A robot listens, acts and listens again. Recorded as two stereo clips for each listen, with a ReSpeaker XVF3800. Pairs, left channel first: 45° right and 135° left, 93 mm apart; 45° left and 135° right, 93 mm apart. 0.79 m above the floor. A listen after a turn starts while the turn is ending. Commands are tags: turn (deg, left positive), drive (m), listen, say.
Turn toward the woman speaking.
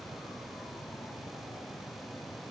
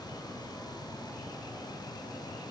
<listen/>
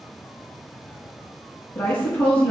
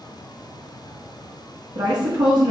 <turn deg="-120"/>
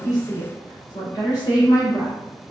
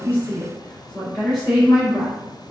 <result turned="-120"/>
<say>Facing the woman speaking, 2 to 4 m away.</say>